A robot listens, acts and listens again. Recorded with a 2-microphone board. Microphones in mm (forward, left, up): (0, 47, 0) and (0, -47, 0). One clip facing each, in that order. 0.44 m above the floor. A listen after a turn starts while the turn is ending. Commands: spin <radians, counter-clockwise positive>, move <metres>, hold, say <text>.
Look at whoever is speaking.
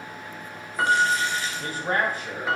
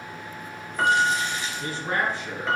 spin 0.70
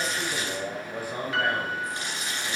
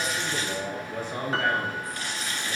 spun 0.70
spin 0.17
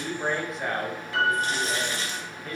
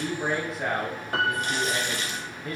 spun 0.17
say Found it: a man speaking, straight ahead, 1 to 2 m away.